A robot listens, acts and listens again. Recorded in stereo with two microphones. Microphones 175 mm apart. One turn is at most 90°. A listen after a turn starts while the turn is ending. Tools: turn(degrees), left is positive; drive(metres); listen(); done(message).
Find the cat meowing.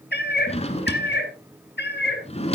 turn(degrees=90)
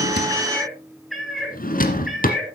done("Found it: a cat meowing, straight ahead.")